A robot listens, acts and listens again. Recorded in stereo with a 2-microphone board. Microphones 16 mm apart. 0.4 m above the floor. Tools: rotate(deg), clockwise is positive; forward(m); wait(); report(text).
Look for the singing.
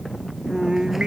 rotate(90)
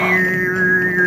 report("Found it: singing, straight ahead.")